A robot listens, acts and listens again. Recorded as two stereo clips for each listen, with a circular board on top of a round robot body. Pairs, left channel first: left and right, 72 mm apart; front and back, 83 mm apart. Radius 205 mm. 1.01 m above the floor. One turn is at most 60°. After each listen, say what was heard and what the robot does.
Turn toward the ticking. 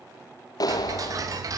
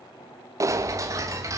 The ticking: 130° right. Turn 60° right.
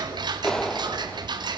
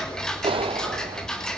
The ticking is now 85° right. Turn 60° right.
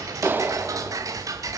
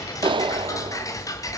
The ticking is now 50° right. Turn 50° right.
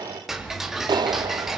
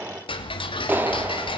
Facing the ticking.